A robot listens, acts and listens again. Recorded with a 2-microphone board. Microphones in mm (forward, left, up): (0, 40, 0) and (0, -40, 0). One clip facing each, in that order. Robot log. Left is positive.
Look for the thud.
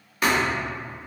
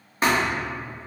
note: The thud: about 30° right or 150° right.
cmd yaw -30
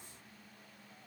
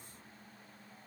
cmd idle
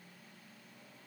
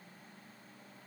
end: I heard a thud, but can't make it out now. It was about straight ahead or 120° right.